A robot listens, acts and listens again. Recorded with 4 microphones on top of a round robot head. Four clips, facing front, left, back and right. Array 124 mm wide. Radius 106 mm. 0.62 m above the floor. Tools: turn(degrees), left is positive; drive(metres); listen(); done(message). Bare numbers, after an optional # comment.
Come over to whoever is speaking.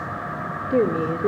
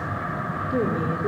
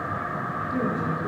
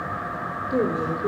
# The woman speaking: 15° right.
turn(-15)
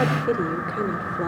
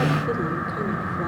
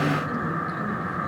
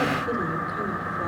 listen()
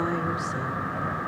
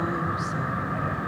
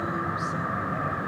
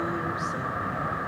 listen()
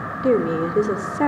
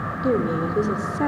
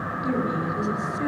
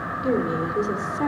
drive(1.0)
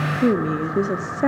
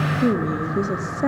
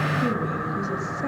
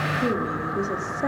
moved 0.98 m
# The woman speaking is now 10° left.
turn(10)
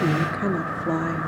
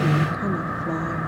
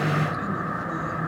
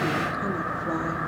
listen()
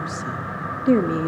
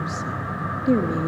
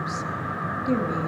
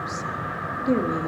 drive(1.0)
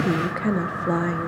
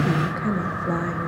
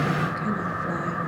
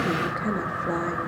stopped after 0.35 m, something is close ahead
done("Arrived at the woman speaking, straight ahead.")